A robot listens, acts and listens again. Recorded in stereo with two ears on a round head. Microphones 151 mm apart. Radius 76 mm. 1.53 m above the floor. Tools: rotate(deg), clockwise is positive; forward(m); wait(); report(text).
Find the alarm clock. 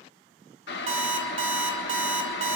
rotate(40)
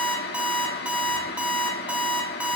rotate(10)
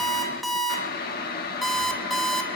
report("Found it: an alarm clock, straight ahead, 2 to 4 m away.")